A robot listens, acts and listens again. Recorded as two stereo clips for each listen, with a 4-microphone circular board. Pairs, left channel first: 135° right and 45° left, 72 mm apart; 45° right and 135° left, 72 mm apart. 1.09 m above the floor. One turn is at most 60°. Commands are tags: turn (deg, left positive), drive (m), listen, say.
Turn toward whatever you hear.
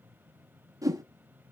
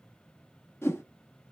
<turn deg="10"/>
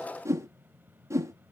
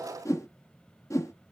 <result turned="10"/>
<say>Found it: a whoosh, straight ahead, under 1 m away.</say>